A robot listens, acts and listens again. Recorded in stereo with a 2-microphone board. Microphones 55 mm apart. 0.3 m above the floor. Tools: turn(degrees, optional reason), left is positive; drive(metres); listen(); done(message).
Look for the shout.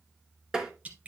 listen()
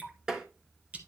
listen()
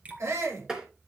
turn(degrees=-65, reason="The shout: about 65° right or 115° right.")
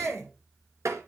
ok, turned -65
turn(degrees=-50, reason="So it is at 50° right.")
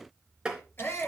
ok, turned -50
turn(degrees=40, reason="The shout is now 40° left.")
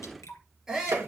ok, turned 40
turn(degrees=-10, reason="The shout is now 10° right.")
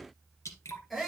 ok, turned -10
done("Facing the shout, over 4 m away.")